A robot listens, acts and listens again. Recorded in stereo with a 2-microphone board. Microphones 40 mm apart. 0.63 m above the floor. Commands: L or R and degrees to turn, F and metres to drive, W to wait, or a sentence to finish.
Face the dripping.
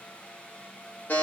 W
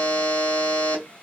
W
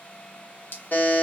L70
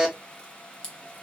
L20
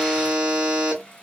W
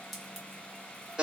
Facing the dripping, under 1 m away.